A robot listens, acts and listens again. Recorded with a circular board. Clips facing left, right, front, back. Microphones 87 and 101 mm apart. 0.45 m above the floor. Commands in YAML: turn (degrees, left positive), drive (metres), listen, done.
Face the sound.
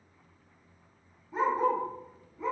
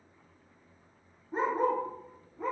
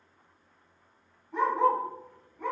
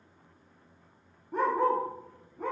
turn: -125
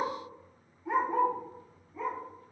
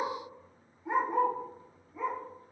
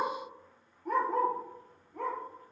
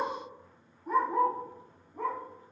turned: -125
done: "Facing the dog barking, 2 to 4 m away."